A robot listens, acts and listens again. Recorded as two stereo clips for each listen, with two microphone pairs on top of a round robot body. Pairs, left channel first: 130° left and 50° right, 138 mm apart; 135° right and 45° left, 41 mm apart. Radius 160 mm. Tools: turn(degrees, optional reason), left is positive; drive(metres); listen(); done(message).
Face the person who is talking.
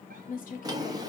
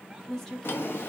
turn(degrees=140, reason="The woman speaking: 140° left.")
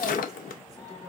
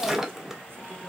listen()
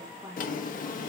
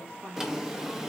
turn(degrees=15, reason="The woman speaking is now 15° left.")
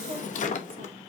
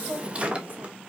listen()
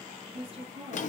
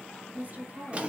done("Facing the woman speaking.")